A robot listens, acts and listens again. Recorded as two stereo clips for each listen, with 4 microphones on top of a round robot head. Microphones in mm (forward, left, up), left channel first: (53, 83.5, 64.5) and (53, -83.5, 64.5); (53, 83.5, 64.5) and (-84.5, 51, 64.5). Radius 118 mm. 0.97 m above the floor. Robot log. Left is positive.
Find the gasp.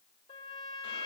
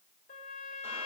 cmd idle
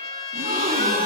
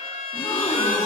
note: The gasp: 60° right.
cmd yaw -60
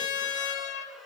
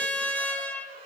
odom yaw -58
end: I heard a gasp from this way, but can't make it out now.